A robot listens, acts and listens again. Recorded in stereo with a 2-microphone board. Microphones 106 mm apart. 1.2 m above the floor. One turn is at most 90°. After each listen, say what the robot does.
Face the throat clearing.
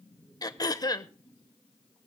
Turn 40° left.
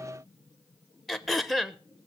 Found it: throat clearing, straight ahead, under 1 m away.